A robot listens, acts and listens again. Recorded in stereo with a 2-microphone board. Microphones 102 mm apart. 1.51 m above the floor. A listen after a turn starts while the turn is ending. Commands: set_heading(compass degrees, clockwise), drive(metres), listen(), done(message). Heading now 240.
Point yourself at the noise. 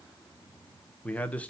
set_heading(210)
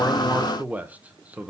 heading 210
set_heading(225)
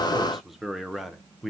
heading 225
done("Facing the man speaking.")